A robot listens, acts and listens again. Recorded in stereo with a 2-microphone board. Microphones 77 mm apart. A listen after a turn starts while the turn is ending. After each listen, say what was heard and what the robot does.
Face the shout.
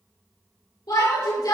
The shout: about 60° left or 120° left. Turn 60° left.
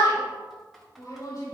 So it is at 60° left. Turn 60° left.
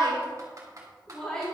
The shout is now 10° left. Turn 10° left.
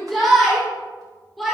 Found it: a shout, straight ahead, 2 to 4 m away.